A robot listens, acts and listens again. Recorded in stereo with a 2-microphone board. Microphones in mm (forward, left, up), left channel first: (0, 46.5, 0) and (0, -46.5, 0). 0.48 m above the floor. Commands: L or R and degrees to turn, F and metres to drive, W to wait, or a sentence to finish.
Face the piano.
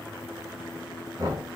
W
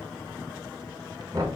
W
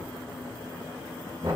I can't make out a piano, only knocking.